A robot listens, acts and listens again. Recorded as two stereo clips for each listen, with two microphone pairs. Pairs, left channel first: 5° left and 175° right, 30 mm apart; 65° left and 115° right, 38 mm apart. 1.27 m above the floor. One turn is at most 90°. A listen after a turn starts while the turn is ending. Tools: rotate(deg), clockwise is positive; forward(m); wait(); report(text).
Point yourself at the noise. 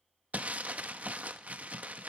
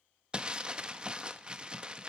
rotate(90)
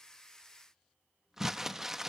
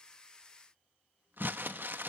rotate(90)
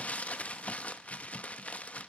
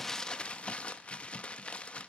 rotate(-15)
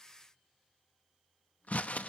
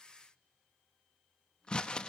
report("Found it: crumpling, straight ahead.")